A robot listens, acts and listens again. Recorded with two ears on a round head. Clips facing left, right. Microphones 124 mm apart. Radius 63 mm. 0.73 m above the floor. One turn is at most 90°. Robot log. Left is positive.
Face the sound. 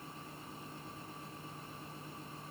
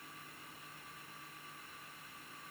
cmd idle
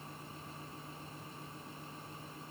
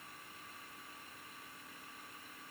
cmd idle
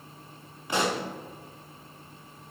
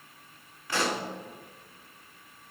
note: The pop: about 20° left or 160° left.
cmd yaw +20
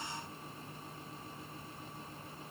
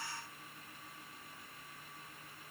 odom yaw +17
cmd idle
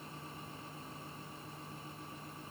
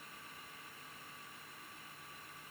end: I heard a pop, but can't make it out now. It was about straight ahead or 145° left.